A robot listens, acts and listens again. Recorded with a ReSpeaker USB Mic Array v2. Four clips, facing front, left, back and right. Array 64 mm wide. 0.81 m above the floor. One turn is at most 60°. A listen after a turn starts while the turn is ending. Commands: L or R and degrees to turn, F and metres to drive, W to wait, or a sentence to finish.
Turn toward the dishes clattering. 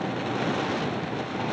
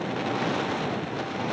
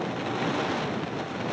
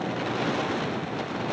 W
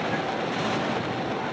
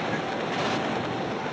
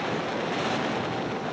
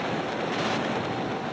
W
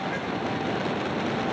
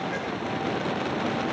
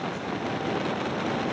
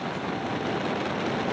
I can't make out dishes clattering to turn to.